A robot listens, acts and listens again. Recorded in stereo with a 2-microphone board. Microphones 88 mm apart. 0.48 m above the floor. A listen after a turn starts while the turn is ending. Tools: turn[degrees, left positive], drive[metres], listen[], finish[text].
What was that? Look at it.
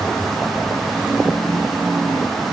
Action: listen[]
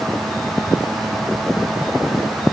Action: listen[]
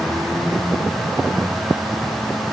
Action: finish[I can't make out anything.]